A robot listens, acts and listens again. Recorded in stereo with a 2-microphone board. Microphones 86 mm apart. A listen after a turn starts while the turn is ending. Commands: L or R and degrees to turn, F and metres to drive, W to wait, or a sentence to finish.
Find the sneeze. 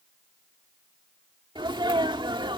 R65
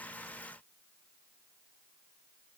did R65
W
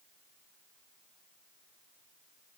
I heard a sneeze, but can't make it out now. It was about straight ahead or 50° right.